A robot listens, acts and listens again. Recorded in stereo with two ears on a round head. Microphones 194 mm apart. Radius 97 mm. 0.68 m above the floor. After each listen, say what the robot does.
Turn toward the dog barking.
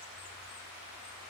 Keep listening.
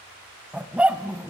Turn 30° right.
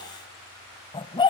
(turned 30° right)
Turn 20° left.
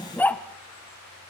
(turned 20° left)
Turn 10° left.
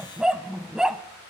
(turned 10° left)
Facing the dog barking, 1 to 2 m away.